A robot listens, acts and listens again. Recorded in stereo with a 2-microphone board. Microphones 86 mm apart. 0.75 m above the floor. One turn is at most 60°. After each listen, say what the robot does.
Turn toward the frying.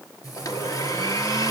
Turn 45° left.
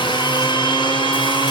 Keep listening.
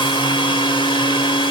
Keep listening.
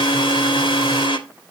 I heard frying, but can't make it out now. It was about straight ahead or 90° left.